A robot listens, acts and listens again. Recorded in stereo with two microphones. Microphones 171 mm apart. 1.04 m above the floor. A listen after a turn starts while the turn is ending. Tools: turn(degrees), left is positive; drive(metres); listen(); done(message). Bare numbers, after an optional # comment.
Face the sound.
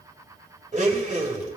# The blender: about 45° right or 135° right.
turn(-45)
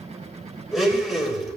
done("Found it: a blender, straight ahead, 2 to 4 m away.")